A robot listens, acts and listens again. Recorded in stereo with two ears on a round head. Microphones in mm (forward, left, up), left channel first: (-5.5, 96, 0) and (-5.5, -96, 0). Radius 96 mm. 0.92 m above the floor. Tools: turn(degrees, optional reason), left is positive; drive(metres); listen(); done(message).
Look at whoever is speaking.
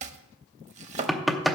listen()
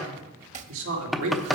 turn(degrees=-65, reason="The man speaking: about 65° right or 115° right.")
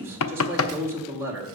turn(degrees=-10, reason="So it is at 10° right.")
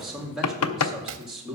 done("Facing the man speaking.")